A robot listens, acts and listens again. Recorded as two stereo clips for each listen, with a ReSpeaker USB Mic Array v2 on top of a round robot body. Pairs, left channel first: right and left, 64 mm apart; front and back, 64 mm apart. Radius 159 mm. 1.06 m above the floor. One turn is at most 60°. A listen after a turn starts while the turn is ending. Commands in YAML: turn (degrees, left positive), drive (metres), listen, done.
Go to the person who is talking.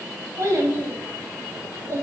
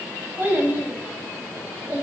turn: 60
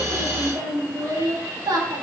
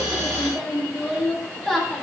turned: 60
turn: 60
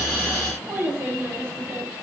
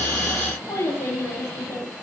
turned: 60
turn: 30
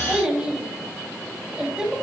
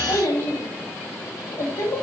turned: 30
turn: 10
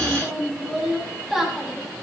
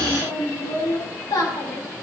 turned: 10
drive: 1.0
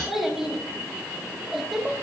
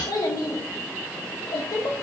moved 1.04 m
drive: 1.0
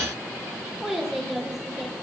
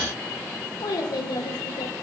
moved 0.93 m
drive: 1.0
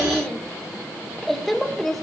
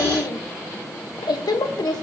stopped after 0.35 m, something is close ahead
done: "Arrived at the child speaking, straight ahead."